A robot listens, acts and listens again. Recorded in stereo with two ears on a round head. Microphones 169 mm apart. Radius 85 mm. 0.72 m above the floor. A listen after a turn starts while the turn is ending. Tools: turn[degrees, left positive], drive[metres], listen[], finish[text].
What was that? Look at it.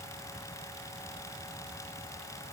Action: listen[]
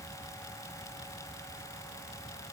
Action: listen[]
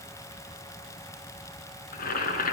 Thought: The boiling: about 50° left or 130° left.
Action: turn[50]
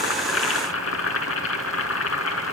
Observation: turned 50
Thought: So it is at 80° left.
Action: turn[80]
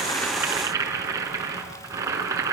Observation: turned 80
Thought: The boiling is now 15° right.
Action: turn[-15]
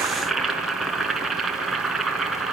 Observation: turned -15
Action: finish[Facing the boiling.]